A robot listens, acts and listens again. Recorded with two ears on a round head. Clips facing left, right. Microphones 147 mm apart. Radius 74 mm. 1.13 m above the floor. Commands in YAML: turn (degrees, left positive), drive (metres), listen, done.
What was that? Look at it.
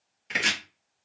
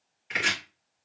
turn: 45
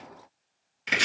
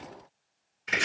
turn: 90
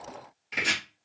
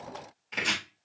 done: "Facing the chopping."